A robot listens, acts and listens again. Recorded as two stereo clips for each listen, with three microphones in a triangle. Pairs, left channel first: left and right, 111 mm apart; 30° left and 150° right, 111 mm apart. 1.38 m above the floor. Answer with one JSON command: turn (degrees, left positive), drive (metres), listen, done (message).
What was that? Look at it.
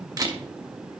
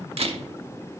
{"turn": -140}
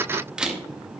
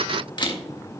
{"turn": -10}
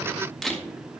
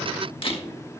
{"done": "Found it: a camera shutter, straight ahead, 1 to 2 m away."}